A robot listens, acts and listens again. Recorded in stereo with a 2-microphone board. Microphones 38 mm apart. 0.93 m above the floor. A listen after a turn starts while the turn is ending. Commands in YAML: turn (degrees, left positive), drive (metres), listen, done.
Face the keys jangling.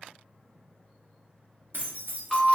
turn: -60
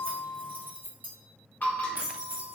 turn: -60
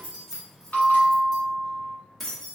done: "Facing the keys jangling."